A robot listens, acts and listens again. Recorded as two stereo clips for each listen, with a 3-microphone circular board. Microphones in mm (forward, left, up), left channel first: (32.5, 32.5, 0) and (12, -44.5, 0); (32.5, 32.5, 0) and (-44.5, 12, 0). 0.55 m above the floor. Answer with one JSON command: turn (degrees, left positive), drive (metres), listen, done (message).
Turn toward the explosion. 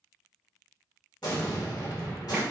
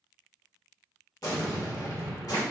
{"turn": 45}
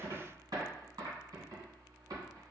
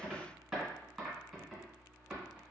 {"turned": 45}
{"done": "I heard an explosion from this way, but can't make it out now."}